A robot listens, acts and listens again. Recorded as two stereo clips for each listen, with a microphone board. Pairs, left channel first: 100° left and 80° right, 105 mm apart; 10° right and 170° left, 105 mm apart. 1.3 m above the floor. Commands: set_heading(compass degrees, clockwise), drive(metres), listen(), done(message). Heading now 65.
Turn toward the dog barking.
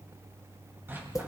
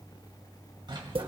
set_heading(215)
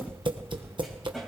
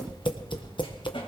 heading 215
listen()
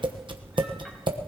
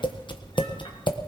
listen()
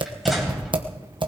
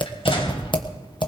set_heading(205)
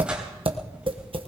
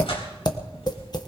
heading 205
listen()
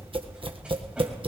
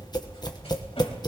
listen()
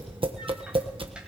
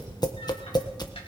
done("Facing where the dog barking came from. I can't hear it now.")